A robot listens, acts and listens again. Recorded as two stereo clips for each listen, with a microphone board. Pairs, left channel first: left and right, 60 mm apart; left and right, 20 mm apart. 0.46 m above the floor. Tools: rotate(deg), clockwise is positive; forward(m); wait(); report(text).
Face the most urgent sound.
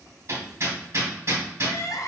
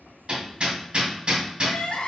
rotate(-70)
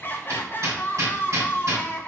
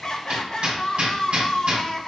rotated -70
rotate(-40)
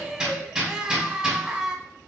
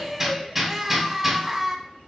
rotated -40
rotate(10)
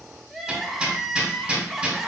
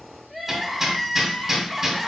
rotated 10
report("Found it: crying, straight ahead.")